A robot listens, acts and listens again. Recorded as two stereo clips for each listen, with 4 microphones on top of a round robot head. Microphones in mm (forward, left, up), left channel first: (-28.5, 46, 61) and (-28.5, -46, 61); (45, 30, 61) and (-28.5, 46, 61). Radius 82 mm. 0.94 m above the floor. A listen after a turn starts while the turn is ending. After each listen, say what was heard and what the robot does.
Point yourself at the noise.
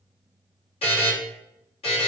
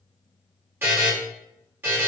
The buzzer: 105° left. Turn 105° left.
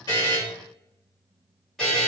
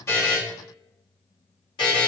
Found it: a buzzer, straight ahead.